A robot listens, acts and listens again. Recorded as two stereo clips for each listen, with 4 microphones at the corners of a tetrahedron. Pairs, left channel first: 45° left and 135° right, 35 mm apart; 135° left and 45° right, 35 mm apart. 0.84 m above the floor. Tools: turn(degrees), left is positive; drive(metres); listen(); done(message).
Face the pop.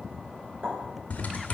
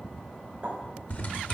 turn(degrees=-110)
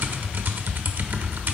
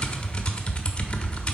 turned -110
done("I heard a pop from this way, but can't make it out now.")